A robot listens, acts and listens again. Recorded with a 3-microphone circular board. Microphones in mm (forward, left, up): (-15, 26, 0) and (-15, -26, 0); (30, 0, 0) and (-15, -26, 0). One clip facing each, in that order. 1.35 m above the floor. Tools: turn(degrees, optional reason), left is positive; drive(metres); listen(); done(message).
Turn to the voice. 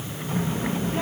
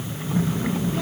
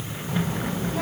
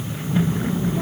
turn(degrees=40, reason="The child speaking: 40° left.")
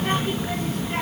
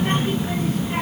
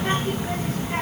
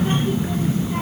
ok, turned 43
done("Found it: a child speaking, straight ahead.")